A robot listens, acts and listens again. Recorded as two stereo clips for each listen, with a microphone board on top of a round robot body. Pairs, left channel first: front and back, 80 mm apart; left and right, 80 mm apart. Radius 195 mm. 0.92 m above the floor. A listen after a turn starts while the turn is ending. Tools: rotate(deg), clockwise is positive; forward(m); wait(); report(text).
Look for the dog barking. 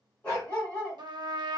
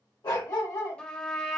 rotate(-70)
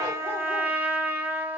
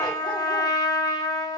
wait()
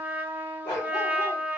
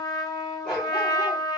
rotate(-20)
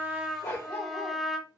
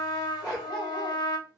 report("Found it: a dog barking, straight ahead.")